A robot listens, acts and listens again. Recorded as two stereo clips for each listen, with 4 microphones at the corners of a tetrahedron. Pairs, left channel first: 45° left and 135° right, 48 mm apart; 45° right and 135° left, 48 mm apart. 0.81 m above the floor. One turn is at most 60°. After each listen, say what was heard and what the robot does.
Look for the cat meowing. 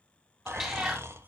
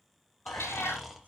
The cat meowing: 60° right. Turn 60° right.
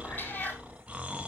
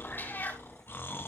Found it: a cat meowing, straight ahead.